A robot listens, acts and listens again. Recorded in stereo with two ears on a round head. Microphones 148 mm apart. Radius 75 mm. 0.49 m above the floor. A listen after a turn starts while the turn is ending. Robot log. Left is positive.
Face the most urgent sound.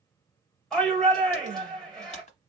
cmd yaw +30
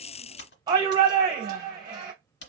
note: So it is at 30° right.
cmd yaw -30
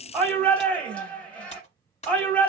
note: The shout is now 10° left.
cmd yaw +10
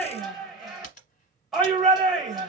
end: Facing the shout, 1 to 2 m away.